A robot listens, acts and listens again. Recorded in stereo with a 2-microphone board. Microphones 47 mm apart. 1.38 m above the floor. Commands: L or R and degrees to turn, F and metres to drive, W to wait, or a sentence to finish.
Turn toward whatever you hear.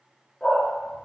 L20
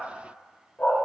L135
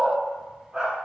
R20
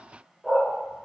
R10
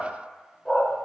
Found it: a dog barking, straight ahead, 1 to 2 m away.